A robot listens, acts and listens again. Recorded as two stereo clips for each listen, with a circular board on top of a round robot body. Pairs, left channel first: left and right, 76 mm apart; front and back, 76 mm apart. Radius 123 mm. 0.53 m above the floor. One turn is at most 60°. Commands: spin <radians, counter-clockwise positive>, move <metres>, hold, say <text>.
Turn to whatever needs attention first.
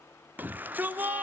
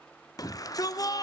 spin -0.44
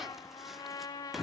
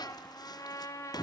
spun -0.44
say Found it: a shout, straight ahead, 1 to 2 m away.